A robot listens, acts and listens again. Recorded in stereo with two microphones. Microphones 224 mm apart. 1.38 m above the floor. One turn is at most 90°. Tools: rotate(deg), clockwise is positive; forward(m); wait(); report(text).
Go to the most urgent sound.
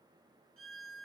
wait()
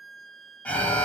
rotate(-30)
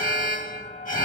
rotate(-90)
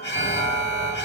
rotate(-50)
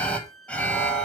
forward(1.0)
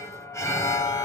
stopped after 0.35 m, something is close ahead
rotate(-15)
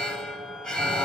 report("Blocked. The alarm is further on, straight ahead.")